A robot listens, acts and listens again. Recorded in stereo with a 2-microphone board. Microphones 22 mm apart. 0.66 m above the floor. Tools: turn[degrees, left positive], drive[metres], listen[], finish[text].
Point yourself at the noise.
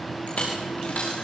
Thought: The dropped coin: about 65° left or 115° left.
Action: turn[65]
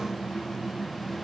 Action: listen[]
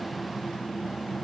Action: finish[I heard a dropped coin, but can't make it out now. It was about straight ahead or 50° left.]